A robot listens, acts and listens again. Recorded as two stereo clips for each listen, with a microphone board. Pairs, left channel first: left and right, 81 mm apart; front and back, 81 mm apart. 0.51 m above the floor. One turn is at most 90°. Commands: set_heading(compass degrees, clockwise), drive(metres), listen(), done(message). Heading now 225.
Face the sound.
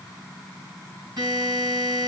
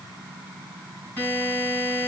set_heading(290)
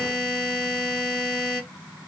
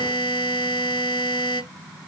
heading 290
done("Facing the buzzer.")